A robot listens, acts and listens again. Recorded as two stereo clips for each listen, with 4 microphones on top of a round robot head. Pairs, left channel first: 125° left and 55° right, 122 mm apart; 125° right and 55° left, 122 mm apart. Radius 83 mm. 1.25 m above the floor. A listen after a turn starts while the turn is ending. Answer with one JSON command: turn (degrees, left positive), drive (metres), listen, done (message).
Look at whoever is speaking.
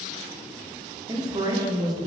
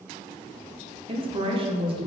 {"done": "Facing the woman speaking, under 1 m away."}